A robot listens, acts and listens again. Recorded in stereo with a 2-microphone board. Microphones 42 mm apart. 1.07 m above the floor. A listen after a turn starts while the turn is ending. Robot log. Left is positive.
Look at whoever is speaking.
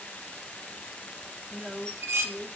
note: The woman speaking: about 25° right or 155° right.
cmd yaw -25
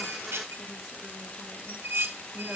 cmd idle
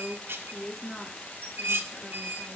end: Found it: a woman speaking, straight ahead, 2 to 4 m away.